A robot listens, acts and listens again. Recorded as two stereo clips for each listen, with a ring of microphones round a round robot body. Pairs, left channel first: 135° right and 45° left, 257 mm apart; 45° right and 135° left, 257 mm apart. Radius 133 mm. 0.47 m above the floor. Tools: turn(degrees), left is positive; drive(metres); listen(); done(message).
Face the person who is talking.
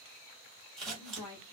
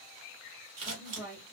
turn(degrees=-145)
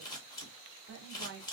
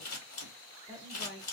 turn(degrees=15)
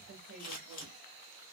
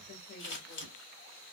done("Found it: a woman speaking, straight ahead, 1 to 2 m away.")